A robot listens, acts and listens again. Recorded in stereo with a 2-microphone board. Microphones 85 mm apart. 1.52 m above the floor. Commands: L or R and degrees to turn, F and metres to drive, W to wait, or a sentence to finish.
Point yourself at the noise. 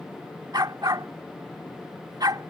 R55
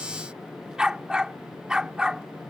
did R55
R10
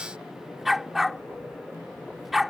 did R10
Found it: a dog barking, straight ahead.